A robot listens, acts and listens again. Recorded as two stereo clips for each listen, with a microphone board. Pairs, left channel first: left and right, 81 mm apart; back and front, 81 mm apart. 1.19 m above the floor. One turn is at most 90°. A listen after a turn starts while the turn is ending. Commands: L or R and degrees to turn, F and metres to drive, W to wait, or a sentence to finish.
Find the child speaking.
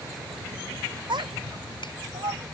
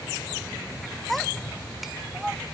R80
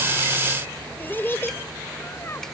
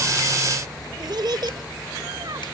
L35
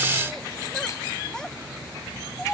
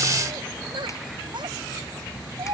L10
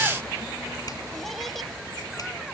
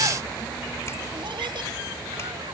W
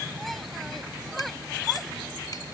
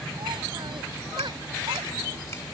W
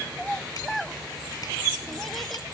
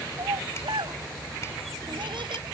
Facing the child speaking.